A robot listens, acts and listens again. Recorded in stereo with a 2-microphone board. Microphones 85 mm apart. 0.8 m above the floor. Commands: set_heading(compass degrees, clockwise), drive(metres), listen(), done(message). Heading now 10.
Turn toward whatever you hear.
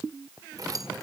set_heading(55)
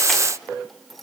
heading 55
listen()
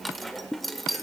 done("Found it: keys jangling, straight ahead, 1 to 2 m away.")